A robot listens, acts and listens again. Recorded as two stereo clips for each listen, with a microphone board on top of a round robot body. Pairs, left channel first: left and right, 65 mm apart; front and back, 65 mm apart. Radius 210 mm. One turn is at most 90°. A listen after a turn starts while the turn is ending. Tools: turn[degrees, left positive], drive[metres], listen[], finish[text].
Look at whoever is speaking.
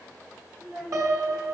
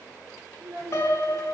Thought: The child speaking: 170° right.
Action: turn[-90]
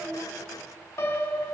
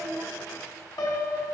Thought: Nothing new. It was at 80° right.
Action: turn[-80]
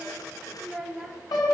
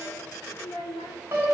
Action: finish[Facing the child speaking.]